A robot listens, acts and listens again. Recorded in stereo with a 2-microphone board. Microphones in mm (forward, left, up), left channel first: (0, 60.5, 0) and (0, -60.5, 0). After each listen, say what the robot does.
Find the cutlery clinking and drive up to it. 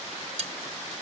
Turn 60° right.
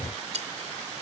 Turn 60° right.
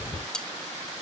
Drive 1.0 m forward.
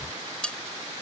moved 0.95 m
Drive 1.0 m forward.
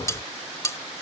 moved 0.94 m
Turn 25° left.
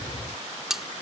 Drive 1.0 m forward.
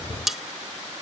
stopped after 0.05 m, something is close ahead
Arrived at the cutlery clinking, straight ahead.